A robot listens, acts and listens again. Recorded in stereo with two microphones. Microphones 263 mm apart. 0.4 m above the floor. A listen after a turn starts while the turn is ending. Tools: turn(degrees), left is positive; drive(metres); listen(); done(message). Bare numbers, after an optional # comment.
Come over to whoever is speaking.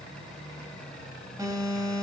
listen()
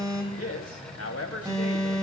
# The man speaking: about 65° left or 115° left.
turn(65)
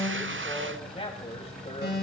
# So it is at 25° left.
turn(25)
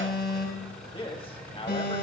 # The man speaking is now 25° left.
turn(25)
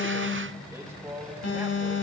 # The man speaking is now 10° right.
turn(-10)
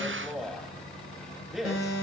drive(1.0)
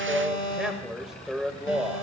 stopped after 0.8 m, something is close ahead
done("I am next to the man speaking.")